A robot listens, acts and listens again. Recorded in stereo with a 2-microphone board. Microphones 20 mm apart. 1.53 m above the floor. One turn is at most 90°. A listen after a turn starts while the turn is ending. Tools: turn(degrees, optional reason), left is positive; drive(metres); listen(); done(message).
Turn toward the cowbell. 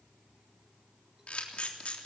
listen()
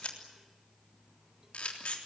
listen()
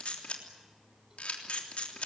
done("I can't make out a cowbell, only a camera shutter.")